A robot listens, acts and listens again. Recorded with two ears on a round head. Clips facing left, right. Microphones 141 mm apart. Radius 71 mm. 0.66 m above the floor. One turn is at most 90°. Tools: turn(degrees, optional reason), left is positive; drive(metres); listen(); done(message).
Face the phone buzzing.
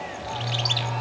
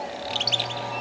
turn(degrees=45, reason="The phone buzzing: about 45° left or 135° left.")
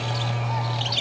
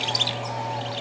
turn(degrees=90, reason="So it is at 90° left.")
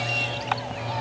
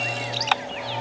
turn(degrees=40, reason="The phone buzzing is now 40° left.")
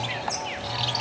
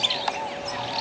listen()
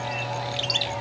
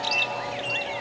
listen()
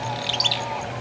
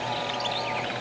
done("Facing where the phone buzzing came from. I can't hear it now.")